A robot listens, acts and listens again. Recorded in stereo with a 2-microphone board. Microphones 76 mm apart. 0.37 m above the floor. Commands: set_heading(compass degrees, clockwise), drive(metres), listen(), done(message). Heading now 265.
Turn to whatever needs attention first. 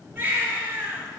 set_heading(290)
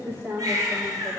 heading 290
set_heading(60)
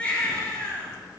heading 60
set_heading(40)
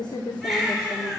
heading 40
done("Found it: a baby crying, straight ahead.")